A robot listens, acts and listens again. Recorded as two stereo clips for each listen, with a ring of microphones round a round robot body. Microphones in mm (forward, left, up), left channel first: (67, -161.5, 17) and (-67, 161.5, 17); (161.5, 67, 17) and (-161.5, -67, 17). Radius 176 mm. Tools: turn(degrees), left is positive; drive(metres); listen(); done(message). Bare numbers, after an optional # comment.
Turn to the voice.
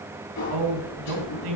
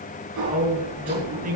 # The man speaking: 135° left.
turn(135)
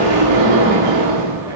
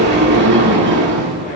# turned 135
listen()
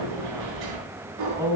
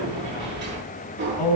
# The man speaking is now 30° left.
turn(30)
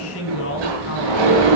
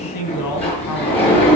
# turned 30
# The man speaking is now 15° right.
turn(-15)
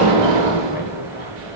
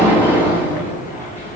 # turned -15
listen()
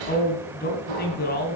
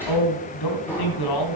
done("Facing the man speaking.")